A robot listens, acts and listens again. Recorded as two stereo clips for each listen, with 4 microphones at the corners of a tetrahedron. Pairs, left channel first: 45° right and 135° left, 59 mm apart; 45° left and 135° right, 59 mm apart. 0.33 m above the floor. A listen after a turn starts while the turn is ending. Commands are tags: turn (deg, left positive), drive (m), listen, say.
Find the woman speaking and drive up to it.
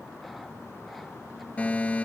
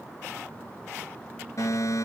<listen/>
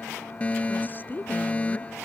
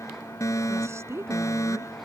<turn deg="-100"/>
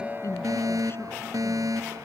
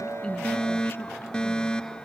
<listen/>
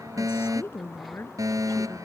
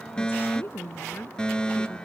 <drive m="1.0"/>
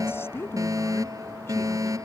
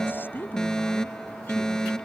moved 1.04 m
<drive m="1.0"/>
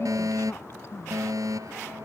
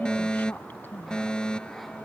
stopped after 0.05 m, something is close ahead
<say>Blocked. The woman speaking is further on, straight ahead.</say>